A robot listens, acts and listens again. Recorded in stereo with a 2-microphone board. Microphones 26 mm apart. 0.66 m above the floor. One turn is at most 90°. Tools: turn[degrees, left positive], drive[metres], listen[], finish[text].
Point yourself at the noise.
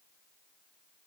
Action: listen[]
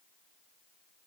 Action: listen[]
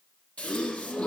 Thought: The gasp: about 70° left or 110° left.
Action: turn[70]
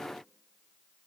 Action: listen[]
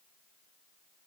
Action: finish[I heard a gasp, but can't make it out now. It was about straight ahead or 40° left.]